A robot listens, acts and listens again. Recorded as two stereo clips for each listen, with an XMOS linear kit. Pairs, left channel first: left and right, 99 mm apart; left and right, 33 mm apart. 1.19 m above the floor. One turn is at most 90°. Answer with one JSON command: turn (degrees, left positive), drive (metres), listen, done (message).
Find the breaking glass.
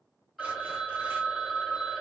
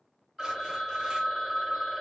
{"listen": true}
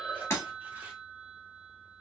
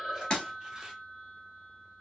{"turn": 25}
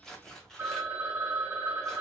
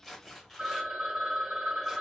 {"listen": true}
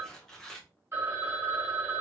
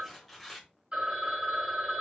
{"done": "I heard breaking glass, but can't make it out now. It was about straight ahead or 130° left."}